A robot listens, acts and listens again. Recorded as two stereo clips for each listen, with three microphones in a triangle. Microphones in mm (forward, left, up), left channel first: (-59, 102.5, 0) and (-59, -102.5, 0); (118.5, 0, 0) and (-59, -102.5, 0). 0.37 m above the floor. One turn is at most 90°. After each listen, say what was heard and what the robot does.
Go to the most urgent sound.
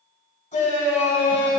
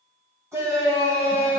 The shout: 135° left. Turn 90° left.
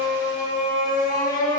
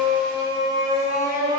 The shout is now 60° left. Turn 60° left.
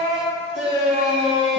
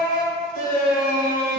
Drive 1.0 m forward.
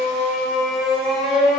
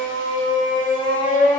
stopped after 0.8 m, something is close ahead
Arrived at the shout, straight ahead.